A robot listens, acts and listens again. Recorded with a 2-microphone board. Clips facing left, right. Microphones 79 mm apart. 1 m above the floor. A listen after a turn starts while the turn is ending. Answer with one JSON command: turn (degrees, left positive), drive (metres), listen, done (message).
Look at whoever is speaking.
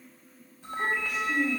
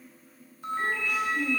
{"turn": 65}
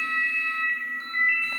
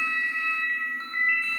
{"listen": true}
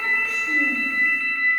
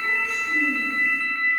{"listen": true}
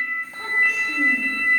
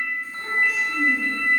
{"done": "I heard a child speaking, but can't make it out now. It was about straight ahead or 50° left."}